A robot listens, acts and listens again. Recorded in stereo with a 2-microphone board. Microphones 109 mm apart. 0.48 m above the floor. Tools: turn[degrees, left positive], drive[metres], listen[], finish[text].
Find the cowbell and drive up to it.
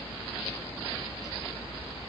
Action: listen[]
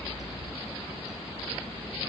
Action: listen[]
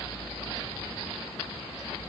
Action: finish[I can't make out a cowbell.]